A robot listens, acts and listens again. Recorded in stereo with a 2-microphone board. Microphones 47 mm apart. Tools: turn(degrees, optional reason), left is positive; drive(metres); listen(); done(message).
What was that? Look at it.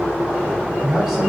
turn(degrees=-30)
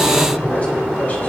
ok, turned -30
turn(degrees=35, reason="So it is at 35° left.")
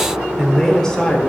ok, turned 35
turn(degrees=20, reason="The man speaking is now 20° left.")
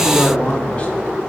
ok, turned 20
turn(degrees=25, reason="The man speaking is now 25° left.")
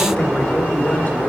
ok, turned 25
listen()
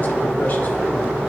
listen()
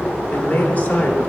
turn(degrees=35, reason="The man speaking is now 35° left.")
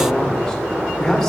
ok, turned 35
done("Facing the man speaking, 1 to 2 m away.")